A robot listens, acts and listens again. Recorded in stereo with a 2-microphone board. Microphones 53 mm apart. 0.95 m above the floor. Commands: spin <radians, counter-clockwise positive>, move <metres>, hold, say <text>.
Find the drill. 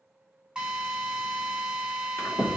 spin -0.26
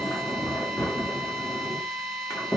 say Facing the drill, 2 to 4 m away.